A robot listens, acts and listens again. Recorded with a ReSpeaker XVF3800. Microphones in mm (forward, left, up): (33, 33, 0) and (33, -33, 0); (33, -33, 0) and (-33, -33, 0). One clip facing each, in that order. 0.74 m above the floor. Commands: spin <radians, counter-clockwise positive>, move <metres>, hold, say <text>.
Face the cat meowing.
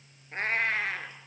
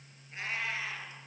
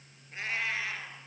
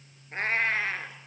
spin 2.27
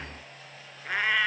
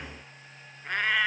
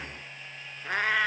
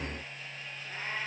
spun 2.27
say Facing the cat meowing.